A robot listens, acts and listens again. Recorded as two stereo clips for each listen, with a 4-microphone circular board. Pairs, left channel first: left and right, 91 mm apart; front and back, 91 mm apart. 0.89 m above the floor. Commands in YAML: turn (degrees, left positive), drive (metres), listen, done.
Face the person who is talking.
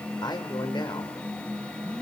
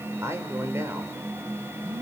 turn: 120
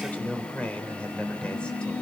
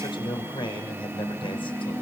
turn: 15
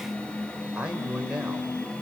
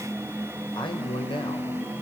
turn: -10
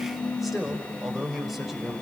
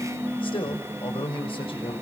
done: "Facing the man speaking."